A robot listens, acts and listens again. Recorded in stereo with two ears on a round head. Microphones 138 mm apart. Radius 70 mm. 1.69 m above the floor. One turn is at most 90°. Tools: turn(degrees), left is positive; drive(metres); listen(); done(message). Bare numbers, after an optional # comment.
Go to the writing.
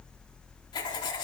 # The writing: about 30° left or 150° left.
turn(30)
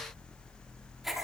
drive(1.0)
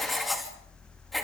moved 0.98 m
drive(1.0)
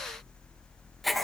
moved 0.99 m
drive(1.0)
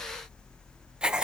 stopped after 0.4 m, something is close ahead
done("I am next to the writing.")